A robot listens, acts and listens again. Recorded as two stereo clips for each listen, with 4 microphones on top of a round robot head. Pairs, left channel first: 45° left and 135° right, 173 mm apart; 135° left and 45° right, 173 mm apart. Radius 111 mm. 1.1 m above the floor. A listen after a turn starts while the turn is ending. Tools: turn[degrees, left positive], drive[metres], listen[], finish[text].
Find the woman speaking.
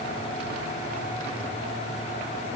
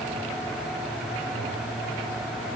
Action: listen[]
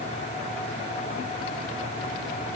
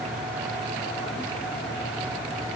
Action: listen[]
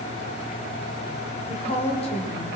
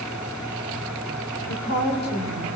Thought: The woman speaking: 105° left.
Action: turn[105]
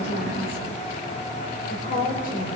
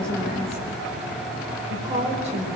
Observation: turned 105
Action: finish[Facing the woman speaking, over 4 m away.]